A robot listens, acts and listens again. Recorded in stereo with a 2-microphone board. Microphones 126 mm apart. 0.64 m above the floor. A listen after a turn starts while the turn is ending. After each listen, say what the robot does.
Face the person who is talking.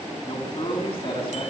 Turn 50° left.
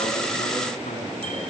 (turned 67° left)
Turn 65° left.
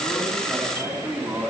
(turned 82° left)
Turn 20° right.
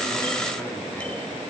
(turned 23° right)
Keep listening.
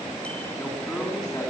Found it: a man speaking, straight ahead.